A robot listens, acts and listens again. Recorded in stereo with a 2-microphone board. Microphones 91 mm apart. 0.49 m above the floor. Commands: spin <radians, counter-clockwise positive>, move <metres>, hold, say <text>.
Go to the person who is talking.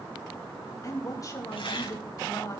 spin 0.70
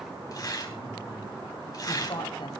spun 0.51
spin 1.92
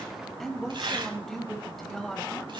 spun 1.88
move 1.0
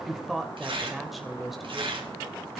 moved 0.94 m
move 1.0
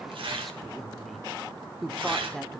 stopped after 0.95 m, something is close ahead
say I am next to the woman speaking.